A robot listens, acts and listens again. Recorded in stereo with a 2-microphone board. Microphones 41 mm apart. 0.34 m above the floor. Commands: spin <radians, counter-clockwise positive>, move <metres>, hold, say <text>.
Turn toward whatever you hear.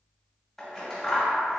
spin 0.52
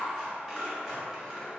spin -0.44
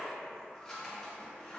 say Facing the scissors.